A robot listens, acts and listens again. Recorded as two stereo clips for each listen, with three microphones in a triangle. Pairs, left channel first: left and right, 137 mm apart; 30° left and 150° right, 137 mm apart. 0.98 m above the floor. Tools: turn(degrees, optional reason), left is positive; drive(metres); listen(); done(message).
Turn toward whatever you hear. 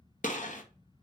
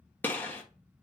turn(degrees=105, reason="The gunshot: 105° left.")
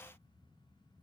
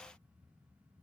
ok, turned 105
done("I heard a gunshot from this way, but can't make it out now.")